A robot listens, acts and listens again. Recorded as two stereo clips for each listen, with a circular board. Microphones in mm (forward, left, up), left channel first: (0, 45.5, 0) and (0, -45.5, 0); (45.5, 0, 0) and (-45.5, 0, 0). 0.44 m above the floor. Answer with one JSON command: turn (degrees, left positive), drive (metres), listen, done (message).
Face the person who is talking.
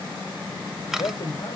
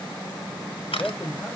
{"turn": 75}
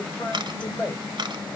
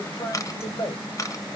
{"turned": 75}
{"turn": 25}
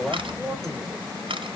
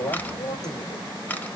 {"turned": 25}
{"done": "Found it: a man speaking, straight ahead, 2 to 4 m away."}